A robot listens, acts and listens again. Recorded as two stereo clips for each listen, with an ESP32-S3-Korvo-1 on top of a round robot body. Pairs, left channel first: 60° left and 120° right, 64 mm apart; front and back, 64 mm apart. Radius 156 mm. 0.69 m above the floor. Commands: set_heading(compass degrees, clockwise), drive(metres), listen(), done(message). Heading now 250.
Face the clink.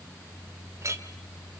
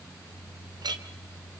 set_heading(60)
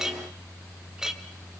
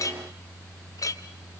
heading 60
set_heading(100)
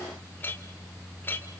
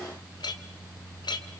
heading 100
done("Found it: a clink, straight ahead.")